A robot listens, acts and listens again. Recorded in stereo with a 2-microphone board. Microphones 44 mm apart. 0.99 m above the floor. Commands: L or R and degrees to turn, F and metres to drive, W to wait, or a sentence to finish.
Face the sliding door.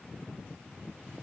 W
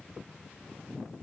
W
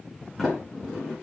L30
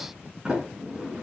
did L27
R20
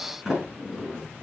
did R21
Found it: a sliding door, straight ahead, over 4 m away.